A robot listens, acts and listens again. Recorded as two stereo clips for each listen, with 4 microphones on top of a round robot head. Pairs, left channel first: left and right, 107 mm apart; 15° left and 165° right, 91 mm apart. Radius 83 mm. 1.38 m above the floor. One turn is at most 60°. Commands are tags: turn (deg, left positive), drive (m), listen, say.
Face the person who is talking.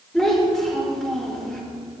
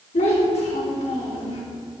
<say>Facing the child speaking, 2 to 4 m away.</say>